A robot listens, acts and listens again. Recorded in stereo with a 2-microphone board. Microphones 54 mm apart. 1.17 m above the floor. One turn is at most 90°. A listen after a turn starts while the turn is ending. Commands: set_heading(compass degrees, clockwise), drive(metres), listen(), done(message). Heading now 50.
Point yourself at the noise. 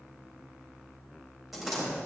set_heading(80)
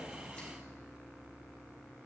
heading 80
listen()
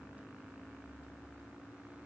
done("I heard a door slam, but can't make it out now. It was about 25° left or 145° right.")